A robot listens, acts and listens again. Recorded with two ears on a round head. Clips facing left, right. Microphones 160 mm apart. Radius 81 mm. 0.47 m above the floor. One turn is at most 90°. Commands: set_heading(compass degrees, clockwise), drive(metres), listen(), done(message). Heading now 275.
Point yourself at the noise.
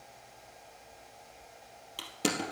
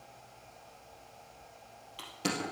set_heading(215)
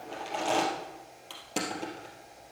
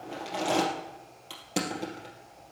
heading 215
done("Found it: crushing, straight ahead, 2 to 4 m away.")